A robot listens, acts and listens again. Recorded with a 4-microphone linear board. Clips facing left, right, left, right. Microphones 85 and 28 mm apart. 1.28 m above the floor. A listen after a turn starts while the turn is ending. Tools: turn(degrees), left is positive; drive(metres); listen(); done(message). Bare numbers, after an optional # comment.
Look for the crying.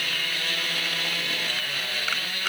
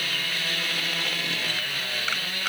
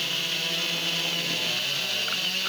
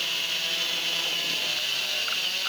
listen()
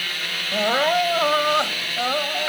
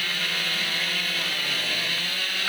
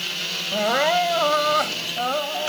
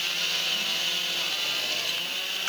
turn(90)
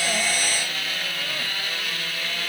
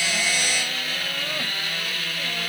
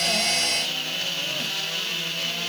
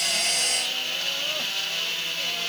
listen()
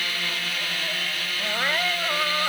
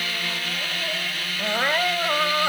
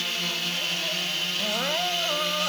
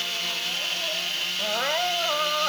# The crying is now 15° right.
turn(-15)
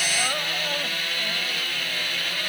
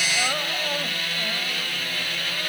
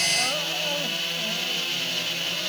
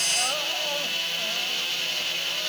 listen()
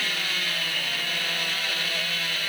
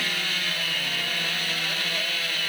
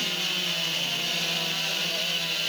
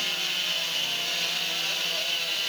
listen()
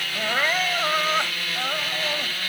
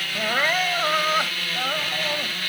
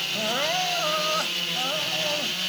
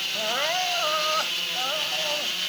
done("Found it: crying, straight ahead.")